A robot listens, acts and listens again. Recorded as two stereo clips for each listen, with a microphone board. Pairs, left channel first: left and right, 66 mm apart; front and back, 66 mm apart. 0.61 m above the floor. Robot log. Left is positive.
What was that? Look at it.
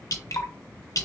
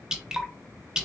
note: The dripping: 105° left.
cmd yaw +105
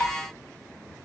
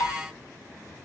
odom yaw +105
note: The dripping is now 30° left.
cmd yaw +30
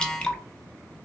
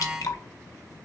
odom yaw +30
note: The dripping is now 15° left.
cmd yaw +15
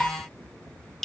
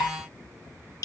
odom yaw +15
note: The dripping is now 10° left.
cmd yaw +10
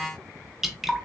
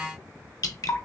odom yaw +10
end: Found it: dripping, straight ahead.